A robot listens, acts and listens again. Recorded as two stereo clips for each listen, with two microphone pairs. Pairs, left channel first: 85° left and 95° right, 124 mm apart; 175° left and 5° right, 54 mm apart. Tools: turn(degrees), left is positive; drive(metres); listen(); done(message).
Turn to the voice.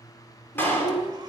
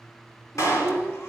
turn(degrees=70)
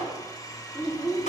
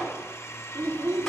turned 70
done("Found it: a child speaking, straight ahead.")